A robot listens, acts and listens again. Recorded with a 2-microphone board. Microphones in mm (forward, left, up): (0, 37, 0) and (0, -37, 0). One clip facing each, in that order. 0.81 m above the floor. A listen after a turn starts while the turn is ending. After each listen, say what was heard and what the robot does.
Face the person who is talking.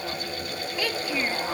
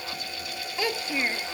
The child speaking: about 25° right or 155° right. Turn 25° right.
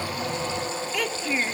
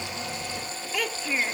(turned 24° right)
Found it: a child speaking, straight ahead.